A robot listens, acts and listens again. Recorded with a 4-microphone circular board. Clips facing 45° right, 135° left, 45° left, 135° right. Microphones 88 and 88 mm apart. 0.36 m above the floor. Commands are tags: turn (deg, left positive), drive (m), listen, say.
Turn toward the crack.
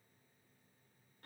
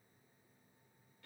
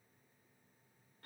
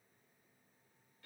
<listen/>
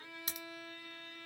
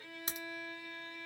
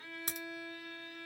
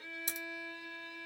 <turn deg="80"/>
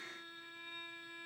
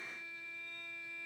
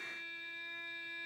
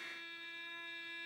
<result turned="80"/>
<say>Facing where the crack came from. I can't hear it now.</say>